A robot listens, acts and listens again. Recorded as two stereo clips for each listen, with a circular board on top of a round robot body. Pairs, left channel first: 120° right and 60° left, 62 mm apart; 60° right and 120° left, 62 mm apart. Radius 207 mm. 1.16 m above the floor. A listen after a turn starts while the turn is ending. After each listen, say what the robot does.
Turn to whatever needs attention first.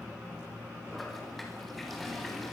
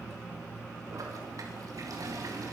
Keep listening.
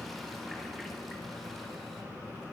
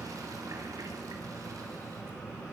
Keep listening.
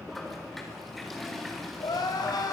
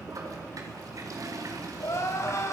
Turn 105° right.
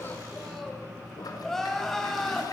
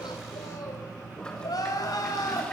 Turn 35° right.
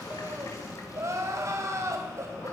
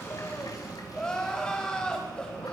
Turn 20° left.
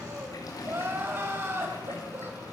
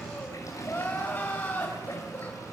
Found it: crying, straight ahead, 2 to 4 m away.